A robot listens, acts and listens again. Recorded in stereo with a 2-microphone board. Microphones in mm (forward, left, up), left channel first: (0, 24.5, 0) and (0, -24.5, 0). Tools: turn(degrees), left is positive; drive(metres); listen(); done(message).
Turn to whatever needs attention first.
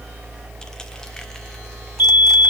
turn(degrees=-50)
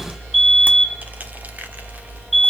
done("Facing the fire alarm, 2 to 4 m away.")